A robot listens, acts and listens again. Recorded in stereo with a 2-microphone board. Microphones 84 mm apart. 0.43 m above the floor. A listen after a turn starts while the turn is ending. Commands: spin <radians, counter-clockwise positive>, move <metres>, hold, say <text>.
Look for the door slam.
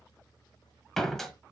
spin 0.52
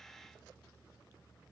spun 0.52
hold
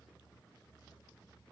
say I heard a door slam, but can't make it out now. It was about 25° right or 145° left.